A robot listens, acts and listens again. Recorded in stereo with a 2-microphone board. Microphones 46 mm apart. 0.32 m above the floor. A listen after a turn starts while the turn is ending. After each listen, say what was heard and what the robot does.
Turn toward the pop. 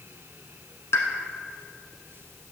Turn 90° left.
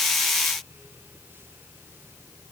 I heard a pop from this way, but can't make it out now.